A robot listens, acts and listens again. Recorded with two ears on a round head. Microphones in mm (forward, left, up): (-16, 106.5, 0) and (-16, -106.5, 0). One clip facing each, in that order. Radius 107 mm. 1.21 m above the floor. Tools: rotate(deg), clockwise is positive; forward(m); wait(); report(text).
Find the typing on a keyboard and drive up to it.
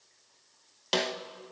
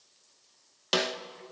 wait()
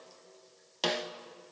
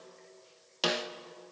wait()
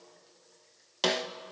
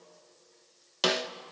report("I can't make out typing on a keyboard, only a snare drum.")